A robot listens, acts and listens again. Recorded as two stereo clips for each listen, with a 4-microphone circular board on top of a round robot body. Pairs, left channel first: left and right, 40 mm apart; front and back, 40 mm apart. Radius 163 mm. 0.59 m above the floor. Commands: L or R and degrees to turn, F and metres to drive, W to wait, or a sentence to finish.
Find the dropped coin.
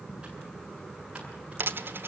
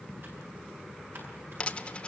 R65
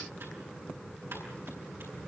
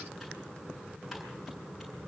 Facing where the dropped coin came from. I can't hear it now.